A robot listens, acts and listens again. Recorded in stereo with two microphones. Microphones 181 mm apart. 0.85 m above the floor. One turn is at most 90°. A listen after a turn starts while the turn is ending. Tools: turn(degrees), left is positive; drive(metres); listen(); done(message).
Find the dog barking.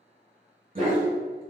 turn(degrees=-50)
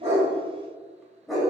done("Facing the dog barking, 1 to 2 m away.")